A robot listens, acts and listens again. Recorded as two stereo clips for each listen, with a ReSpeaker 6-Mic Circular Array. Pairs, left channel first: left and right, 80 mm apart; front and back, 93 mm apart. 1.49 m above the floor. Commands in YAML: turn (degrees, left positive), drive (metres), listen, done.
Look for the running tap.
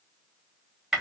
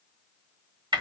listen: true
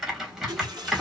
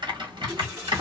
turn: -120
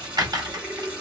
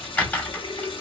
turn: -15
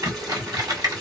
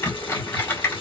listen: true
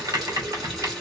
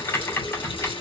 done: "Facing the running tap."